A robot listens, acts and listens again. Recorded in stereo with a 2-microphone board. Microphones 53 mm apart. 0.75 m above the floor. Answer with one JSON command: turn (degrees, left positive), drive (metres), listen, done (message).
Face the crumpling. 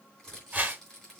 {"turn": 30}
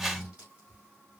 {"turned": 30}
{"turn": -25}
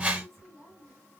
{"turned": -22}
{"done": "Found it: crumpling, straight ahead."}